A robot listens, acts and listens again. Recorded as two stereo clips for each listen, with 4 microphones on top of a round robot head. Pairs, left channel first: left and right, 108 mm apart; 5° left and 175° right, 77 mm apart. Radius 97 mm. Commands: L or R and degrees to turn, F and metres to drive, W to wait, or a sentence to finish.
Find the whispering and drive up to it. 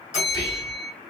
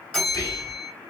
L45
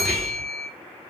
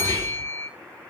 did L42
F1.0
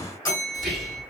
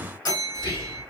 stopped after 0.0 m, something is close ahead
Blocked. The whispering is further on, straight ahead.